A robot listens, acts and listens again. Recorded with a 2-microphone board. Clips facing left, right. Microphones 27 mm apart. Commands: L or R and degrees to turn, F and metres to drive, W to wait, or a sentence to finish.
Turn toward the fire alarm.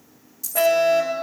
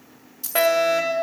R90
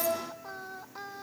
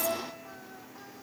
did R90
W
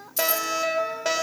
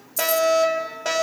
Found it: a fire alarm, straight ahead.